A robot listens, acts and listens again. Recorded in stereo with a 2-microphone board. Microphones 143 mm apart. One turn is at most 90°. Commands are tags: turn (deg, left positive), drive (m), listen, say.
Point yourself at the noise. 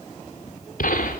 <turn deg="90"/>
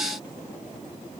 <say>Facing where the gunshot came from. I can't hear it now.</say>